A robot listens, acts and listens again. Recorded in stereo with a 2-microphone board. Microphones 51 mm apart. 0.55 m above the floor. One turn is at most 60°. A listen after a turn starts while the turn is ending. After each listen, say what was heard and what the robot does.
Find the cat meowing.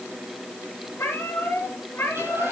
The cat meowing: about 50° left or 130° left. Turn 50° left.
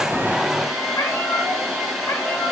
So it is at 80° left. Turn 60° left.
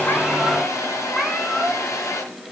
The cat meowing is now 10° left. Turn 10° left.
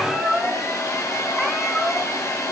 Facing the cat meowing, 2 to 4 m away.